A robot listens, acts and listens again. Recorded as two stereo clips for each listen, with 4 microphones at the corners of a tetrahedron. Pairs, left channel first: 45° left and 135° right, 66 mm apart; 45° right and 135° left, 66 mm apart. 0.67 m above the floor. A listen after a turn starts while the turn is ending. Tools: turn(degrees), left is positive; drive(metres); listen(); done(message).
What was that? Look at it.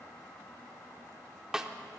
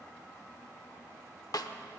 turn(degrees=-55)
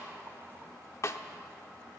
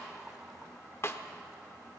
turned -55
done("Facing the snare drum, under 1 m away.")